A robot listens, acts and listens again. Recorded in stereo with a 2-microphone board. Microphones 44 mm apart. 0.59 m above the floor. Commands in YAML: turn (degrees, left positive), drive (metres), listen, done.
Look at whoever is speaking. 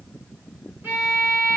listen: true
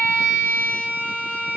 listen: true
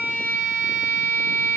done: "I can't make out anyone speaking, only a violin."